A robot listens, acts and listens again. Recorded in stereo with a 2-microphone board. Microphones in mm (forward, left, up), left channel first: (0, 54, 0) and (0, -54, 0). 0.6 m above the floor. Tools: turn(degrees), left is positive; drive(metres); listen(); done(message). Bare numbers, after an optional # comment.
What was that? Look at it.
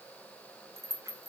# The rattle: about 25° right or 155° right.
turn(-25)
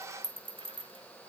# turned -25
# So it is at 125° right.
turn(-125)
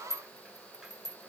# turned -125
done("Found it: a rattle, straight ahead.")